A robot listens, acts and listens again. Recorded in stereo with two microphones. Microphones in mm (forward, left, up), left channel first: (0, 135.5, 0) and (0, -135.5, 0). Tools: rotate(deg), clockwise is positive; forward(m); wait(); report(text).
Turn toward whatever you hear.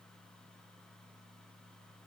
wait()
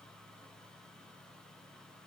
wait()
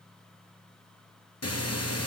rotate(-70)
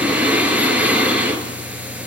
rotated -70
report("Found it: breathing, straight ahead, 1 to 2 m away.")